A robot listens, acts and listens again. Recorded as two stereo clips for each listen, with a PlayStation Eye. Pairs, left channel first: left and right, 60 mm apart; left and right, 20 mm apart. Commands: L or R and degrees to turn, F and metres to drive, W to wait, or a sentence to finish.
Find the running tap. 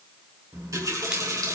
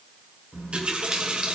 R70
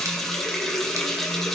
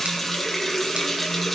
Found it: a running tap, straight ahead.